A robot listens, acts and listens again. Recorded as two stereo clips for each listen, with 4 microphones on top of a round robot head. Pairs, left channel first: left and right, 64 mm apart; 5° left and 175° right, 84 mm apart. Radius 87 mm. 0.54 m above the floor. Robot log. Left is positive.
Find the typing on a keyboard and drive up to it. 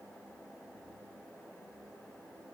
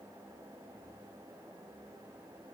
cmd idle
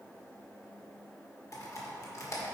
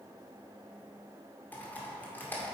note: The typing on a keyboard: 70° left.
cmd yaw +70
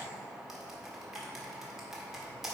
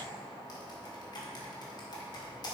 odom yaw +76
cmd fwd 1.0
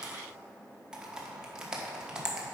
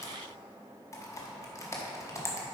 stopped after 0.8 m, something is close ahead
note: The typing on a keyboard is now 20° right.
cmd yaw -20
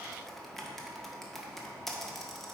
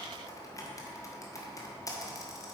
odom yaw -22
end: I am next to the typing on a keyboard.